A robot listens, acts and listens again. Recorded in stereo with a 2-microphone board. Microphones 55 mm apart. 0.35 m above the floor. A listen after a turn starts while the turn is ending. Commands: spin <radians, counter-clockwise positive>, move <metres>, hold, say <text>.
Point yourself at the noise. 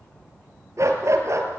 spin -1.05
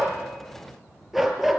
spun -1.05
say Facing the dog barking, 2 to 4 m away.